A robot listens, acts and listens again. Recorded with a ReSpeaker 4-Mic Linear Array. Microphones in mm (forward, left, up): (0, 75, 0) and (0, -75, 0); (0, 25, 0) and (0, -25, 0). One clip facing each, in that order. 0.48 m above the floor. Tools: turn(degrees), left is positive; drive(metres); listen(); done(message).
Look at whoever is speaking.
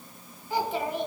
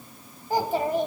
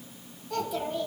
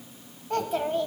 turn(degrees=-45)
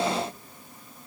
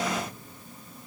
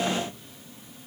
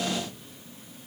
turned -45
listen()
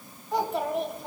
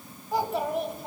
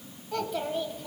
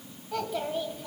done("Found it: a child speaking, straight ahead.")